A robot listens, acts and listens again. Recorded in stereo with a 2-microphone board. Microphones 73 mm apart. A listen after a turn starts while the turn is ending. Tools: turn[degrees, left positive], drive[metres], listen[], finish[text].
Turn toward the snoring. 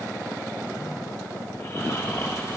Thought: The snoring: about 40° left or 140° left.
Action: turn[40]
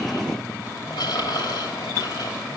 Thought: So it is at 95° left.
Action: turn[95]
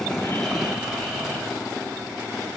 Action: listen[]
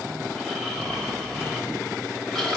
Action: finish[Facing the snoring, 2 to 4 m away.]